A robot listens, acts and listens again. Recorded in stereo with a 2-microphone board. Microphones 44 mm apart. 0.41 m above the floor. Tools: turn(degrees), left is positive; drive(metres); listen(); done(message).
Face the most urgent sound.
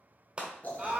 turn(degrees=-25)
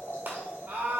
turn(degrees=-125)
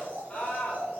turn(degrees=35)
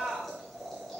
turn(degrees=-20)
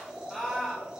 done("Facing the scream.")